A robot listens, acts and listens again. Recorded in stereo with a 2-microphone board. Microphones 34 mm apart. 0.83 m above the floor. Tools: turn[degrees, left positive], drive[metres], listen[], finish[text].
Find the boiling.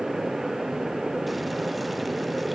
Action: listen[]
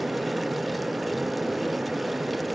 Action: listen[]
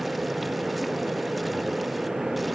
Action: finish[I can't make out boiling to turn to.]